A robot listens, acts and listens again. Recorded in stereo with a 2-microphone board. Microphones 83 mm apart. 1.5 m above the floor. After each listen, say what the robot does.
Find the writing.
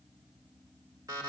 Keep listening.
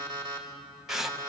Turn 30° right.
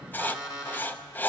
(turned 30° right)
Turn 25° left.
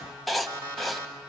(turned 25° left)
Facing the writing.